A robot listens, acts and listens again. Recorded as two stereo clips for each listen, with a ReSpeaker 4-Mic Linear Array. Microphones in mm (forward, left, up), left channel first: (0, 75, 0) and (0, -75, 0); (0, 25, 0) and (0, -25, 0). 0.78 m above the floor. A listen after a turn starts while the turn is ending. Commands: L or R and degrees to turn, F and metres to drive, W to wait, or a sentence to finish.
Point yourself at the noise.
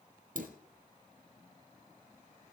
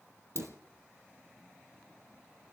R60
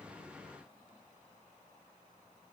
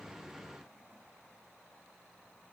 W
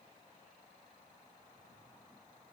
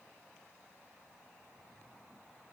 I heard a dropped coin, but can't make it out now. It was about straight ahead or 60° right.